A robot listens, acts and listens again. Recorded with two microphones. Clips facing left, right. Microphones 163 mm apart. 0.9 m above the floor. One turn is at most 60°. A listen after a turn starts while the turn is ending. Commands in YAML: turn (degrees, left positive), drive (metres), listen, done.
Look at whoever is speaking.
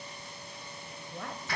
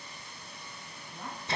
turn: 60
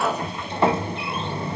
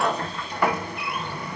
listen: true
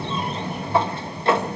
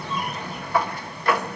listen: true
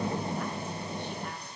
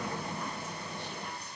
done: "I heard a woman speaking, but can't make it out now. It was about 15° left or 45° left."